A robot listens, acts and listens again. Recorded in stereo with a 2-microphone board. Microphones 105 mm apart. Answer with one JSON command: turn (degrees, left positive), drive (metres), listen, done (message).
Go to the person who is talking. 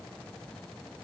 {"listen": true}
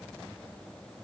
{"listen": true}
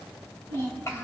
{"turn": 25}
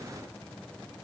{"listen": true}
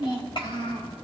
{"turn": 130}
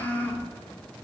{"turn": 20}
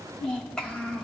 {"turn": 10}
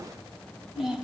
{"drive": 1.0}
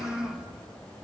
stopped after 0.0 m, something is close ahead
{"done": "Blocked. The child speaking is further on, straight ahead."}